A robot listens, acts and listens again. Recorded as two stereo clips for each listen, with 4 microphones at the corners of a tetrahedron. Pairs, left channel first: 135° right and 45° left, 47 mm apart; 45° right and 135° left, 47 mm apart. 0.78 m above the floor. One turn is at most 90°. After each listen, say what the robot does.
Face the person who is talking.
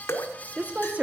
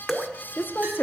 Turn 10° right.
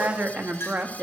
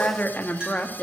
Found it: a woman speaking, straight ahead, 1 to 2 m away.